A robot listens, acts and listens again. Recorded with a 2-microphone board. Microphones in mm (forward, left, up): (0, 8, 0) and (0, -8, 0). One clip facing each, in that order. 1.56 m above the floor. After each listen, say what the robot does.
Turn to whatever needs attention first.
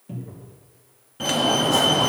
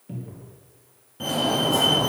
Turn 30° left.
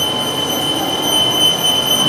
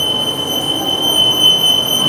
Found it: a fire alarm, straight ahead.